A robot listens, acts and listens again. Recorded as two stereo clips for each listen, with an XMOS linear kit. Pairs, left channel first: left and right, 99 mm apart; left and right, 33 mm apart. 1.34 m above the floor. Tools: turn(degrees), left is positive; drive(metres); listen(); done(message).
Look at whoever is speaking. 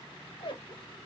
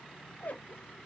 listen()
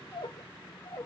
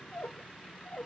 listen()
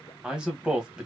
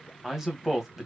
turn(degrees=-30)
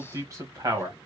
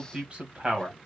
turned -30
turn(degrees=-145)
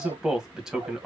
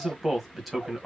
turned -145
done("Found it: a man speaking, straight ahead, 1 to 2 m away.")